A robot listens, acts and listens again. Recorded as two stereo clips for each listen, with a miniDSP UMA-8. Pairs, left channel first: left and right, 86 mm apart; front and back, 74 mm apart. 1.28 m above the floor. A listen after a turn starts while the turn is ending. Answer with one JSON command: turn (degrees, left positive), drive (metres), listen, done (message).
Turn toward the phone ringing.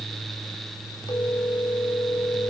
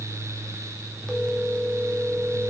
{"turn": 80}
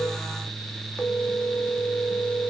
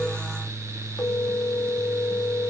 {"turn": 10}
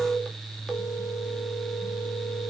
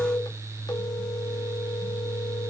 {"done": "Facing the phone ringing."}